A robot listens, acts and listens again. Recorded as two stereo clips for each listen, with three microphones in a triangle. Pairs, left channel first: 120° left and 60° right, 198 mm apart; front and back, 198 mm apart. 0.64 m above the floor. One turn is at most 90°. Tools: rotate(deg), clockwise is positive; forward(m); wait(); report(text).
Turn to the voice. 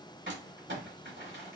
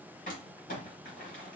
wait()
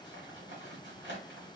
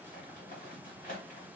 wait()
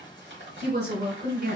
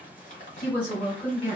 rotate(90)
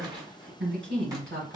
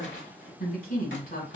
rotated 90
rotate(45)
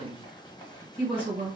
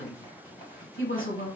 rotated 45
report("Found it: a woman speaking, straight ahead, 1 to 2 m away.")